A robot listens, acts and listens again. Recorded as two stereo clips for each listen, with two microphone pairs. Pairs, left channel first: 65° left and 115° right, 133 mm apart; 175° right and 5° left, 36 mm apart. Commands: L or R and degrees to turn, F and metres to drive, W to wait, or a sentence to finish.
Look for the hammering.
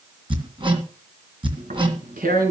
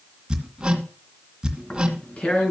R65
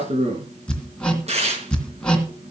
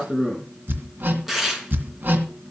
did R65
R20
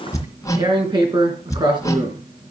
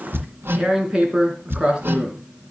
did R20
Facing the hammering, 2 to 4 m away.